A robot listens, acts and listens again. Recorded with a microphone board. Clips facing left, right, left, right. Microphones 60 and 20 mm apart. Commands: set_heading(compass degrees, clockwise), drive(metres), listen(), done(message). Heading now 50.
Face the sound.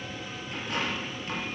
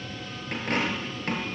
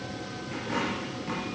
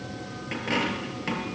set_heading(105)
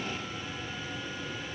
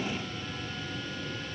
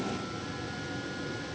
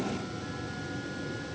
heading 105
listen()
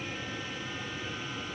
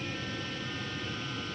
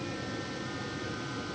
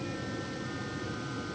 done("I heard a dropped coin, but can't make it out now. It was about straight ahead or 70° right.")